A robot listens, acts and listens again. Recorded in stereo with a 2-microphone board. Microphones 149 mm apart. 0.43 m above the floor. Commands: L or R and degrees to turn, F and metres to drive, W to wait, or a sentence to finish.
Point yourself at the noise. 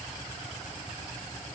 W
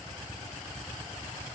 W
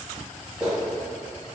R30
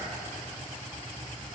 W
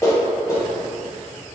L25
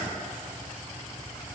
W
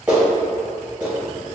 R15
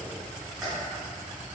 W
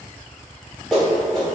Found it: a clap, straight ahead, 1 to 2 m away.